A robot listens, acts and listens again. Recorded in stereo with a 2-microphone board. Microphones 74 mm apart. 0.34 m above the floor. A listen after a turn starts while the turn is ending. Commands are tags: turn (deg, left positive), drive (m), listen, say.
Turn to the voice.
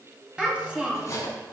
<turn deg="-30"/>
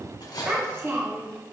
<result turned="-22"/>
<turn deg="-140"/>
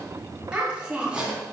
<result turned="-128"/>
<turn deg="-15"/>
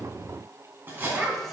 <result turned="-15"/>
<say>Found it: a child speaking, straight ahead.</say>